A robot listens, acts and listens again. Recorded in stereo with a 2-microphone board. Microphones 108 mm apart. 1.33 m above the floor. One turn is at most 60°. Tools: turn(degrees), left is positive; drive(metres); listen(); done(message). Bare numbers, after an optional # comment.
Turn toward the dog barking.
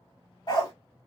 # The dog barking: about 40° left or 140° left.
turn(40)
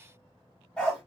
done("Facing the dog barking, 1 to 2 m away.")